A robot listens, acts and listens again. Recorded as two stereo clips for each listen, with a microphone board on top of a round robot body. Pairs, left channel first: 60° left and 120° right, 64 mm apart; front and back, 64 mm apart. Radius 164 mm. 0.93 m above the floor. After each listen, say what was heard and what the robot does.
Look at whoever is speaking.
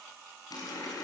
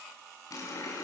Keep listening.
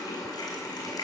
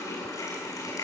Keep listening.
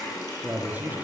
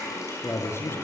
The man speaking: 50° right. Turn 50° right.
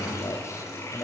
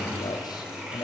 The man speaking is now 15° left. Turn 15° left.
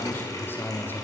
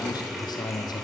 Found it: a man speaking, straight ahead.